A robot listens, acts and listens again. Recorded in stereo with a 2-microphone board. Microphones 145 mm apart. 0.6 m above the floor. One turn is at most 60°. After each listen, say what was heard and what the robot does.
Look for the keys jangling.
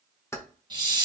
The keys jangling: about 20° left or 160° left. Turn 20° left.
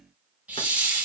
Keep listening.
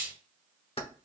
So it is at 140° left. Turn 60° left.
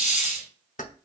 The keys jangling is now 65° left. Turn 60° left.
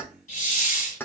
The keys jangling is now 15° left. Turn 15° left.
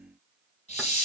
Keep listening.
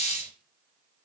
Keep listening.
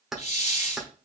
Found it: keys jangling, straight ahead.